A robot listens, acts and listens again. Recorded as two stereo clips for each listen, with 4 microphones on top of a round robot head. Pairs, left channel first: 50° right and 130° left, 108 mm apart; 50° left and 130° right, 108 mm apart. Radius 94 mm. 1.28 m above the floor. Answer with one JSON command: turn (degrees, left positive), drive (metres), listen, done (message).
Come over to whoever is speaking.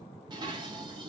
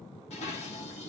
{"listen": true}
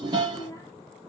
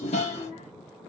{"turn": 15}
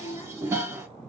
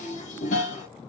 {"drive": 1.0}
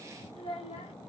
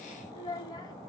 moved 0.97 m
{"drive": 1.0}
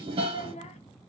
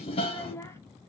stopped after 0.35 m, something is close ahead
{"turn": -20}
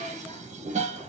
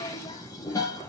{"listen": true}
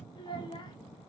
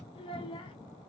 {"done": "Arrived at the child speaking, straight ahead."}